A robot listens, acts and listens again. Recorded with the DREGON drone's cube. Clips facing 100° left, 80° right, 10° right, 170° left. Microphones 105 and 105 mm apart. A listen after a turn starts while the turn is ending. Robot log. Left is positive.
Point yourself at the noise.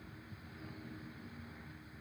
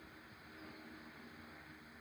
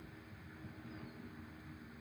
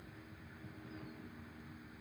cmd idle
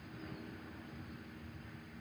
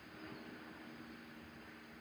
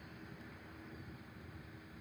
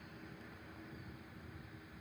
cmd idle
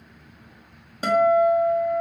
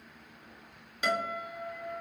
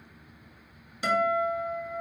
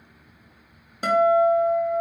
note: The guitar: 140° left.
cmd yaw +140
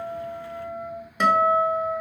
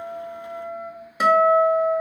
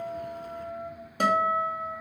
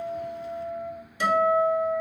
end: Facing the guitar, 1 to 2 m away.